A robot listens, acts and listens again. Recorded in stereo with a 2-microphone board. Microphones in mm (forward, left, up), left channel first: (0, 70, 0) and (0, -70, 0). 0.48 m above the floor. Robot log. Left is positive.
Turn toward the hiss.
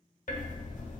cmd idle
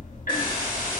note: The hiss: about 35° left or 145° left.
cmd yaw +35
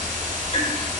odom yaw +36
note: So it is at 10° left.
cmd yaw +10
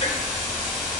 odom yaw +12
cmd idle
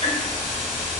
end: Facing the hiss, 1 to 2 m away.